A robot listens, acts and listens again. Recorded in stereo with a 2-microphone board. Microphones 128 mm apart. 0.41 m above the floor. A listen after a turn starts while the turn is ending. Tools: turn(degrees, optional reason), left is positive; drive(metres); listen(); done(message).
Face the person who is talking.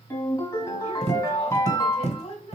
turn(degrees=55, reason="The woman speaking: about 55° left or 125° left.")
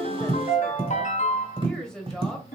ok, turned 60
done("Facing the woman speaking, 1 to 2 m away.")